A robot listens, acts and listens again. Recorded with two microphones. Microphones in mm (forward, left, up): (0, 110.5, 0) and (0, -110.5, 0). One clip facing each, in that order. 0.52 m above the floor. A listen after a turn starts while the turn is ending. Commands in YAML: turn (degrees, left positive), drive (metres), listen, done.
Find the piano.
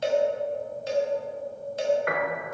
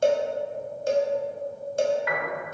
turn: 55
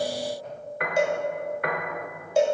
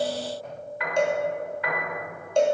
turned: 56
turn: 65
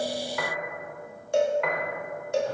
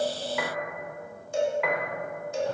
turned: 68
done: "Facing the piano."